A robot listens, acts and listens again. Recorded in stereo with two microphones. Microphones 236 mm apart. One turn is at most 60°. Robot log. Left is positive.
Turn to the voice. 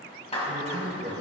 note: The man speaking: about 30° right or 150° right.
cmd yaw -30
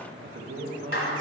note: So it is at 110° right.
cmd yaw -60
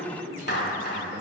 note: The man speaking is now 45° right.
cmd yaw -45
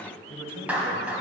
note: The man speaking is now 15° left.
cmd yaw +15
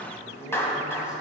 end: Facing the man speaking, 1 to 2 m away.